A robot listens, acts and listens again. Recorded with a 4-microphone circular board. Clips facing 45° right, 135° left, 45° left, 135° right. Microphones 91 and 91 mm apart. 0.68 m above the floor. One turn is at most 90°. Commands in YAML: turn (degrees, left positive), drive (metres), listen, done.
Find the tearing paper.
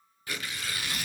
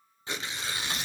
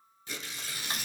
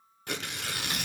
turn: -90
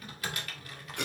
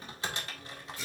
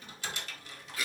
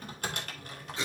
turn: -70
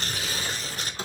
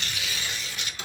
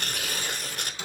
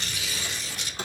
done: "Facing the tearing paper."